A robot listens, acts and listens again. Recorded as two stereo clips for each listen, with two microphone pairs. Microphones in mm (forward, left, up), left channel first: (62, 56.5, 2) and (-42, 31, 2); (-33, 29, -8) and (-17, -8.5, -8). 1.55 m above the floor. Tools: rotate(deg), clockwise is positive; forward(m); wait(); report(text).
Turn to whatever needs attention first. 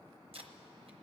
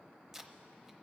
wait()
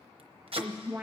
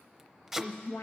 rotate(-115)
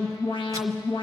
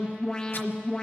rotate(-45)
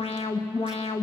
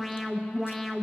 rotate(-20)
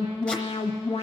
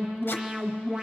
report("Found it: an alarm, straight ahead.")